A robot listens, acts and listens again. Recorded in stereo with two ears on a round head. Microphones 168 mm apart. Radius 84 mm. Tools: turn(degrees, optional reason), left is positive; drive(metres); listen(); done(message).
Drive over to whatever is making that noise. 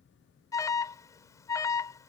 turn(degrees=20, reason="The alarm: about 20° left or 160° left.")
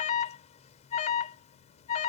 turn(degrees=140, reason="So it is at 140° left.")
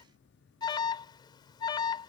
turn(degrees=20, reason="The alarm is now 20° left.")
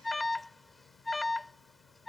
drive(metres=1.0)
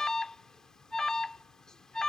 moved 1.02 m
drive(metres=1.0)
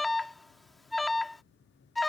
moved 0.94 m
drive(metres=1.0)
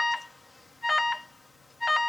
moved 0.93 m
drive(metres=1.0)
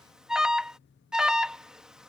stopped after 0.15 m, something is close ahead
done("I am next to the alarm.")